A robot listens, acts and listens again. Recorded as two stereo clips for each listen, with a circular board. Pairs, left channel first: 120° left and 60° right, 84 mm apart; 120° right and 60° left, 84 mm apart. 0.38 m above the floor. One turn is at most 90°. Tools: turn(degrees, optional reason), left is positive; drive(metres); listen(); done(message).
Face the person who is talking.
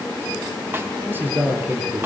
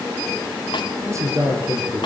done("Facing the man speaking.")